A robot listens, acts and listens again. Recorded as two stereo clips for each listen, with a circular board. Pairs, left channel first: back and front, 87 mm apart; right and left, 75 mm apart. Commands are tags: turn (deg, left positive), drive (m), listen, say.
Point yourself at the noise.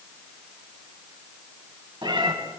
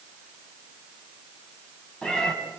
<turn deg="-10"/>
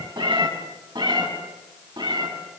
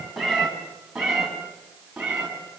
<turn deg="10"/>
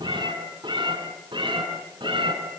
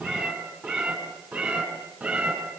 <turn deg="10"/>
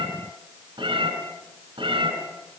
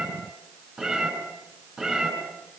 <say>Found it: a cat meowing, straight ahead.</say>